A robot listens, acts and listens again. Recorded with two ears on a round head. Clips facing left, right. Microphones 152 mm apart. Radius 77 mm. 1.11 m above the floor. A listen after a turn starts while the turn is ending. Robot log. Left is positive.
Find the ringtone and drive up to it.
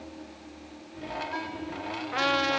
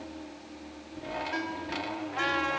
note: The ringtone: about 25° right or 155° right.
cmd yaw -25
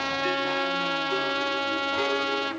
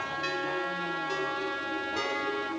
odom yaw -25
cmd idle
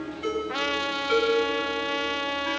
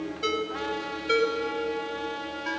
note: So it is at 130° right.
cmd yaw -130
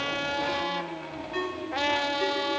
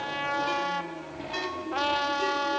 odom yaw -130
note: The ringtone is now 55° right.
cmd yaw -55
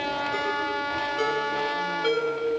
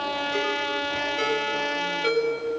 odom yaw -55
note: The ringtone is now 10° right.
cmd yaw -10
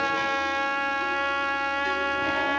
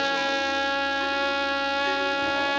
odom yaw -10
cmd idle
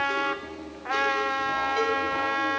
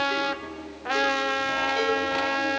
cmd idle
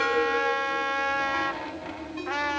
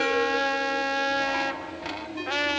end: I heard a ringtone from this way, but can't make it out now. I did not reach it.